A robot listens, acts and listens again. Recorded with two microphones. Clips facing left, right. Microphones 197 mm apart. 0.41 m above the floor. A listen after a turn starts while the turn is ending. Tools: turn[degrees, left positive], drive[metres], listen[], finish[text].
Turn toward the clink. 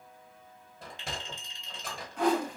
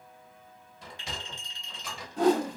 Thought: The clink: about 25° left or 155° left.
Action: turn[25]
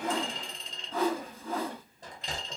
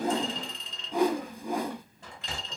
Thought: So it is at 130° left.
Action: turn[130]
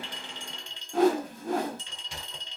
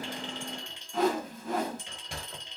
Thought: The clink is now 15° right.
Action: turn[-15]
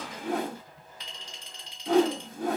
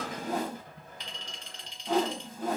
Action: finish[Facing the clink.]